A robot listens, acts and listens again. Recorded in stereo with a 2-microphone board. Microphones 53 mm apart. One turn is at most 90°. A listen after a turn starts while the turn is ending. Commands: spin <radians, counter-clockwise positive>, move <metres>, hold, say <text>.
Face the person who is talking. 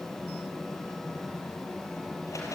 hold
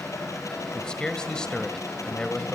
spin 0.52
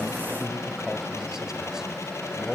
spin -0.17
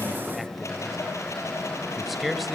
say Facing the man speaking, 2 to 4 m away.